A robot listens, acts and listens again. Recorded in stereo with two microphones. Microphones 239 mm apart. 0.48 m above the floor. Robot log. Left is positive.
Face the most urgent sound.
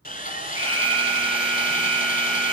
cmd yaw -30
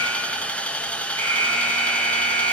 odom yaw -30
note: So it is at 20° left.
cmd yaw +20
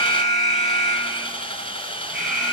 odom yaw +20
end: Facing the alarm, over 4 m away.